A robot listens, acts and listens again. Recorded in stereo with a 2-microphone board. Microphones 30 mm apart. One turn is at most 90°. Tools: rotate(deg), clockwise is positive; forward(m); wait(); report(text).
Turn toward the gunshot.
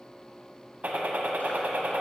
rotate(60)
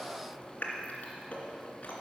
wait()
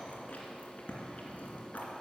report("I heard a gunshot, but can't make it out now. It was about straight ahead or 60° right.")